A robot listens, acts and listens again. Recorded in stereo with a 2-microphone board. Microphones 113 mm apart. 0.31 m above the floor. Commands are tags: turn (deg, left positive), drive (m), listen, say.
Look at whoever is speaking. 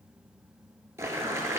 <listen/>
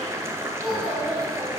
<turn deg="-30"/>
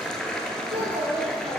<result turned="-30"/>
<turn deg="-130"/>
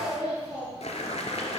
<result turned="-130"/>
<turn deg="-10"/>
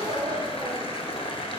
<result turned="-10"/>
<say>Facing the child speaking, over 4 m away.</say>